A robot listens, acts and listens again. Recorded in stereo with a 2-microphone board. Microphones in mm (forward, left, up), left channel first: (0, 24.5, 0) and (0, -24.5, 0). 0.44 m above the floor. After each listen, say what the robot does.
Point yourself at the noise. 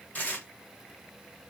Turn 35° left.
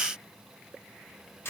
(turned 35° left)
Turn 105° left.
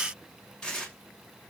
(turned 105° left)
Turn 15° left.
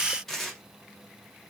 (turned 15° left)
Facing the tearing paper.